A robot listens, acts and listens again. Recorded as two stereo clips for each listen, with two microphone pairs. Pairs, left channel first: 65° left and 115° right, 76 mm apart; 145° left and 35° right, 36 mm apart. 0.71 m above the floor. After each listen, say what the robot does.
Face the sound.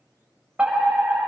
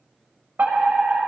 Turn 40° right.
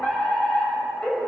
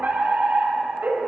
Turn 10° right.
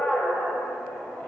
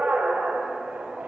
Facing the fire alarm.